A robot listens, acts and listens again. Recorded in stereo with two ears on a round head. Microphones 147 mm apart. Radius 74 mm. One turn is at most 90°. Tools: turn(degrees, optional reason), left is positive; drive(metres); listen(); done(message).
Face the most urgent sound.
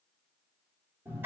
listen()
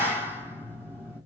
listen()
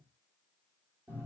done("I can't make out anything urgent, only a clap.")